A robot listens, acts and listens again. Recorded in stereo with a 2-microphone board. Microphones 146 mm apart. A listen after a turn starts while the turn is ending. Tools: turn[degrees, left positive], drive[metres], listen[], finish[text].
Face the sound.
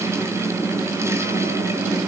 Action: listen[]
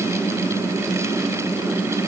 Action: listen[]
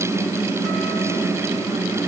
Action: finish[I can't make out anything to turn to.]